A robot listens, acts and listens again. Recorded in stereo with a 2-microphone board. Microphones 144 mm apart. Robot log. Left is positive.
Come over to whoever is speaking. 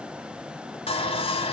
cmd idle
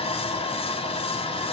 cmd idle
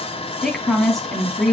cmd yaw +30
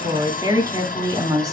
note: So it is at 30° right.
cmd yaw -30
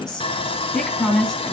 cmd fwd 1.0
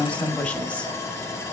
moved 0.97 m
note: The woman speaking is now 10° left.
cmd yaw +10
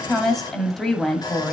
cmd fwd 1.0
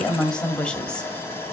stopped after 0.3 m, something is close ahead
note: The woman speaking is now 10° left.
cmd yaw +10
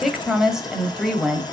end: I am next to the woman speaking.